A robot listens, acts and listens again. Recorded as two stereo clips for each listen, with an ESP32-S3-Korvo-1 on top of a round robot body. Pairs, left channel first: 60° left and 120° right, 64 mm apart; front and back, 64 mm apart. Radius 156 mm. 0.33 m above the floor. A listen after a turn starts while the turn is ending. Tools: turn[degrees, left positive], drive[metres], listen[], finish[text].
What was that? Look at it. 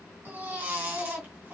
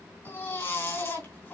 Thought: The baby crying: 55° right.
Action: turn[-55]
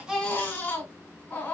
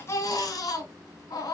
Action: finish[Facing the baby crying.]